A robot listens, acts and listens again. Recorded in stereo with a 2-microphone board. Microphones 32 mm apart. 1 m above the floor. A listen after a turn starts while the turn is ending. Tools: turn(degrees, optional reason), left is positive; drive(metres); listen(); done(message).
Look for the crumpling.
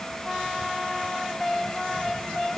listen()
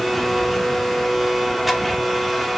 listen()
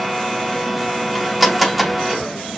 done("I can't make out crumpling, only a blender.")